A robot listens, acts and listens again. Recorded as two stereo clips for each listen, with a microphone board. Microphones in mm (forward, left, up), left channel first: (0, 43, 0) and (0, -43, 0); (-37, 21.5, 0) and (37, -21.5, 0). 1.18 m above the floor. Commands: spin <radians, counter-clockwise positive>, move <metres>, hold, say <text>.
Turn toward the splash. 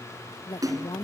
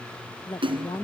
spin -0.79
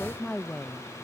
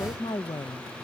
say Facing where the splash came from. I can't hear it now.